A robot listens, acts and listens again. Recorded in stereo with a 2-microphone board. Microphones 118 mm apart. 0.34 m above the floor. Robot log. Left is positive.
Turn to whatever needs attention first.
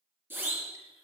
note: The siren: about 15° right or 165° right.
cmd yaw -15
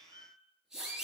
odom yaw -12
end: Facing the siren.